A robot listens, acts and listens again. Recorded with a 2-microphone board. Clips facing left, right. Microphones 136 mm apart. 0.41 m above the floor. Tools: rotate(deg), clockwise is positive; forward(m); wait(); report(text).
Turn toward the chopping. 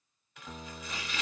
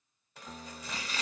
rotate(35)
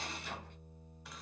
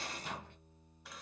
report("Facing the chopping.")